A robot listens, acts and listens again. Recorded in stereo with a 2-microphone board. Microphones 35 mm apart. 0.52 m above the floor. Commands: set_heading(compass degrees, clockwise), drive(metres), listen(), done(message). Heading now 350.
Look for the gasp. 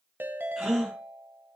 set_heading(20)
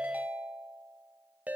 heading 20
listen()
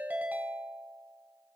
done("I heard a gasp, but can't make it out now. It was about 25° left or 145° right.")